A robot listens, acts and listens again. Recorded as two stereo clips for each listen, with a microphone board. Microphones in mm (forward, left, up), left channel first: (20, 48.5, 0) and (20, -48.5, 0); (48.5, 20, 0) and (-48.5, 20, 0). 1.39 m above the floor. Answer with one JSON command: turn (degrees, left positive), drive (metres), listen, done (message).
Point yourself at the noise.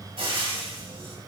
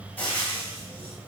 {"turn": -70}
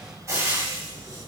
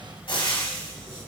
{"turn": -30}
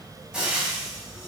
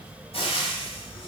{"done": "Facing the frying, 2 to 4 m away."}